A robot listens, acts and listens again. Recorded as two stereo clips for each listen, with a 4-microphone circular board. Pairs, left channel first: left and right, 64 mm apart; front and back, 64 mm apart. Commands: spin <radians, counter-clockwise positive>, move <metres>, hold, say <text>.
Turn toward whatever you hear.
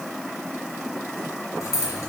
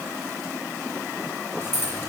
spin 0.96
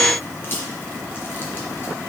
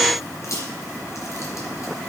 spin 0.61
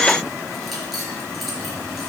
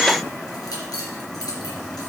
say Facing the keys jangling.